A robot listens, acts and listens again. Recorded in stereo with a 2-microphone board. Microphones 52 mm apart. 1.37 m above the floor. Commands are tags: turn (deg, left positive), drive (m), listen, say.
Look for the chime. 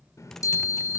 <turn deg="90"/>
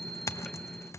<turn deg="10"/>
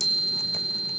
<say>Facing the chime, 2 to 4 m away.</say>